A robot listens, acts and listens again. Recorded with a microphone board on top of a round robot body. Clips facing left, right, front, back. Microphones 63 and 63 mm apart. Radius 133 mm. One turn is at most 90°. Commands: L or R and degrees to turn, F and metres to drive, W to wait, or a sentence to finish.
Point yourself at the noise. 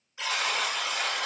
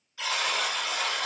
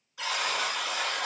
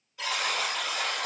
L10
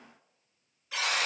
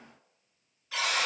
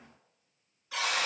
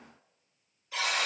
Facing the buzzer, 1 to 2 m away.